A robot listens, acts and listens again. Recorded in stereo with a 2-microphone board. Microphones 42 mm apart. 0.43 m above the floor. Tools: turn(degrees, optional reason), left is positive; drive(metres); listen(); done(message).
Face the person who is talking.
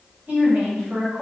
turn(degrees=-55, reason="The woman speaking: about 55° right or 125° right.")
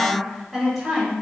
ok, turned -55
turn(degrees=-10, reason="So it is at 10° right.")
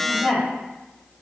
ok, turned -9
done("Facing the woman speaking, 1 to 2 m away.")